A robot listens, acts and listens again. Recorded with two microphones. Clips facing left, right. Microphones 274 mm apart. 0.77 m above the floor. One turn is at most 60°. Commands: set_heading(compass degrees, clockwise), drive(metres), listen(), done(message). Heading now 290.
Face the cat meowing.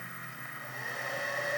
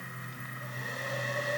listen()
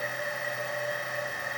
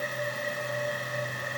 listen()
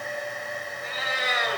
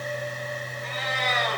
set_heading(260)
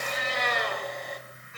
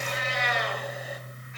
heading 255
set_heading(195)
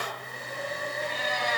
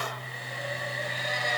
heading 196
set_heading(136)
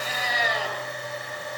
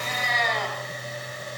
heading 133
set_heading(123)
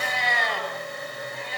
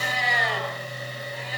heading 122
done("Found it: a cat meowing, straight ahead, over 4 m away.")